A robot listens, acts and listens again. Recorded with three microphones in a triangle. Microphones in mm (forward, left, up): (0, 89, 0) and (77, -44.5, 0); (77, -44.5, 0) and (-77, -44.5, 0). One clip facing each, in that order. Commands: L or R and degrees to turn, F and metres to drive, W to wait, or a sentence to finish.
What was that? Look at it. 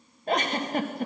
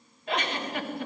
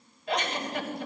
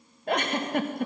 L160
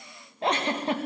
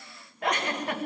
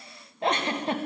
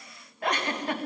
L60
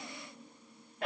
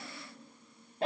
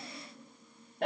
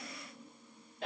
Found it: a giggle, straight ahead.